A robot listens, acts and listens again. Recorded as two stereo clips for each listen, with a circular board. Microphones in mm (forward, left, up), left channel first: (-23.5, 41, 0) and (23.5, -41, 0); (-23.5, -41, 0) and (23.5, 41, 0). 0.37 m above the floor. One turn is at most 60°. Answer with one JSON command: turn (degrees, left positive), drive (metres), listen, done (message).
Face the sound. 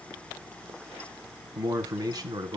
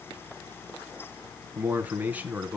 {"turn": -15}
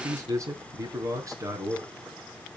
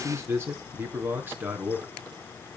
{"turn": -10}
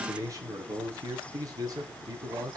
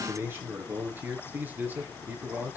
{"turn": -10}
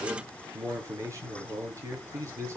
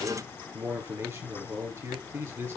{"done": "Found it: a man speaking, straight ahead."}